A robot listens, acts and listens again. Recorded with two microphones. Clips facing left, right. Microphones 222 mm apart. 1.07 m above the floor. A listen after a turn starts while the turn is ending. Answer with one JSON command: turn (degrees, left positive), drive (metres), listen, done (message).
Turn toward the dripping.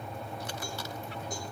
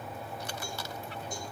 {"listen": true}
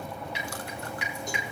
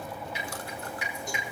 {"turn": 70}
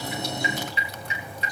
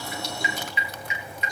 {"turn": 35}
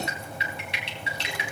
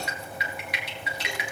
{"turn": 30}
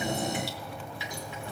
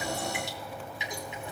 {"turn": -20}
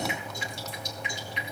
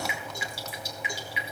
{"done": "Found it: dripping, straight ahead."}